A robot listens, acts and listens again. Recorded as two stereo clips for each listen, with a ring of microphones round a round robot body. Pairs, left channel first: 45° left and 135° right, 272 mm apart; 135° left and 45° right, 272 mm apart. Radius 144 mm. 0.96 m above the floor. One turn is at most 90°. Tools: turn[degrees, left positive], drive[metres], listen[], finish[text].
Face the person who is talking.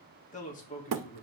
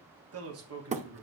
Thought: The man speaking: 15° right.
Action: turn[-15]
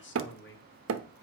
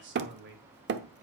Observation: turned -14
Action: finish[Facing the man speaking, 2 to 4 m away.]